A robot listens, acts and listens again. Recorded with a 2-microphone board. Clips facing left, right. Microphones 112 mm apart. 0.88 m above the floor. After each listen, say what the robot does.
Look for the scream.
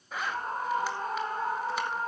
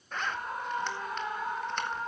Turn 35° left.
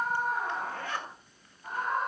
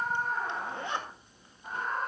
Facing the scream, 2 to 4 m away.